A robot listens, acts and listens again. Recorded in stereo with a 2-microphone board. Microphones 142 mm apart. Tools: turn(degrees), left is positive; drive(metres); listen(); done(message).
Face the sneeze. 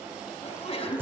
turn(degrees=45)
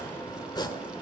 listen()
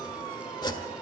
done("I heard a sneeze, but can't make it out now. It was about straight ahead or 90° left.")